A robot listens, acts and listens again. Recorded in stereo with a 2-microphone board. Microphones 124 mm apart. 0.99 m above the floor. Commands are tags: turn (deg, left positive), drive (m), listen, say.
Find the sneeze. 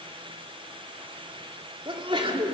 <turn deg="-45"/>
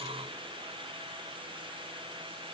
<listen/>
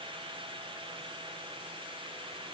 <say>I heard a sneeze, but can't make it out now. It was about straight ahead or 90° right.</say>